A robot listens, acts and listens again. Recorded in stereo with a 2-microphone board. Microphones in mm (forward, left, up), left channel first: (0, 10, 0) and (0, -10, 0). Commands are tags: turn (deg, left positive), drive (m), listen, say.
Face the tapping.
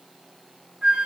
<listen/>
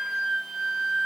<listen/>
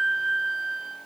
<say>I can't make out tapping to turn to.</say>